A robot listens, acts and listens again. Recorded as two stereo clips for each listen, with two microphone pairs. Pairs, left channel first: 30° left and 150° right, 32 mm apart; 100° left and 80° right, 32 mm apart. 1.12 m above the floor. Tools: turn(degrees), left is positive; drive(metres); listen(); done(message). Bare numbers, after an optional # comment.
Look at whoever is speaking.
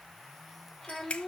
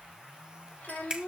# The child speaking: 105° left.
turn(105)
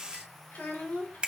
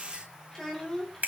# The child speaking is now 25° left.
turn(25)
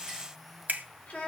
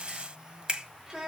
# The child speaking is now 10° right.
turn(-10)
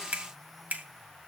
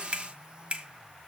listen()
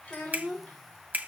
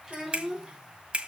done("Facing the child speaking, 2 to 4 m away.")